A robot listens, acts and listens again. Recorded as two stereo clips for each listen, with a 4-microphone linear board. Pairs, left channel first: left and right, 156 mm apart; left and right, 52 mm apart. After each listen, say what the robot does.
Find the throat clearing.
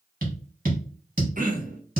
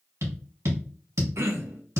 Turn 60° right.
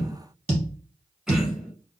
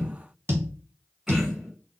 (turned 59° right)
Found it: throat clearing, straight ahead, under 1 m away.